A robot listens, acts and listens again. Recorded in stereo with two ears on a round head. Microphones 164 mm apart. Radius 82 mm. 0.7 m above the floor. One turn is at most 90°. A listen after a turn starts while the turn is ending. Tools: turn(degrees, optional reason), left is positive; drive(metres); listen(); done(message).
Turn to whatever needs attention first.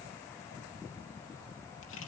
listen()
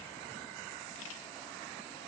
listen()
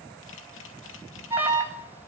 turn(degrees=-30)
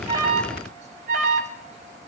turn(degrees=-90, reason="So it is at 140° right.")
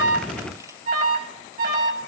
turn(degrees=-50, reason="The alarm is now 50° right.")
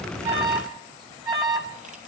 turn(degrees=-25, reason="The alarm is now 25° right.")
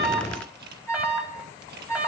turn(degrees=-10, reason="The alarm is now 10° right.")
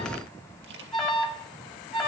done("Facing the alarm.")